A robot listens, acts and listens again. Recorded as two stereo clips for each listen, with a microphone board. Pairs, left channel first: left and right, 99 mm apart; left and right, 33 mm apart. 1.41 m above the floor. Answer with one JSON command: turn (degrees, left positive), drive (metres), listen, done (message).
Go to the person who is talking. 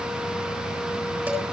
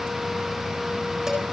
{"listen": true}
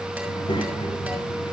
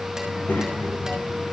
{"turn": 55}
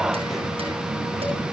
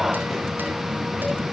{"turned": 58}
{"listen": true}
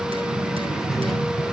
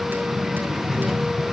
{"drive": 1.0}
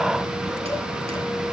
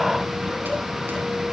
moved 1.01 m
{"listen": true}
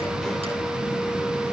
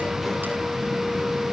{"listen": true}
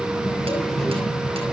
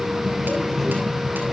{"drive": 1.0}
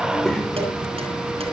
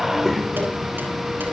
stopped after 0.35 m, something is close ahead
{"done": "Blocked. The child speaking is further on, straight ahead."}